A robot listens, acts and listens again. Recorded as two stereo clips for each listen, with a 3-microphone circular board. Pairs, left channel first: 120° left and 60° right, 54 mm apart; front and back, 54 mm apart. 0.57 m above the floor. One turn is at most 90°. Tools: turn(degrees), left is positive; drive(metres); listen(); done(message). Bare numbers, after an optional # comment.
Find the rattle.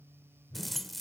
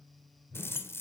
# The rattle: 30° left.
turn(30)
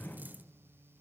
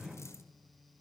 listen()
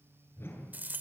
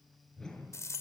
# The rattle is now 10° right.
turn(-10)
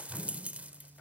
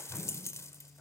done("Found it: a rattle, straight ahead.")